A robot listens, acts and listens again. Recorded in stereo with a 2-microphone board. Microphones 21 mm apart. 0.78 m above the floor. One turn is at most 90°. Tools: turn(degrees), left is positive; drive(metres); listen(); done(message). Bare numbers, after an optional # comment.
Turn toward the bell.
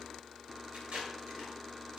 listen()
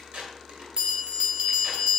# The bell: about 45° right or 135° right.
turn(-45)
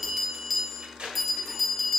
done("Found it: a bell, straight ahead.")